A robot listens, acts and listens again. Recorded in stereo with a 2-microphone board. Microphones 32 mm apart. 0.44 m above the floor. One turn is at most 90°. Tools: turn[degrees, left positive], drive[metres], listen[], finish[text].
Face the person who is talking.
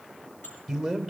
Action: turn[30]
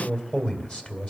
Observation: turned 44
Thought: So it is at 140° left.
Action: turn[90]
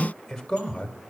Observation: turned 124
Thought: The man speaking is now 15° left.
Action: turn[15]
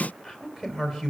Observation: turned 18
Action: finish[Found it: a man speaking, straight ahead, 2 to 4 m away.]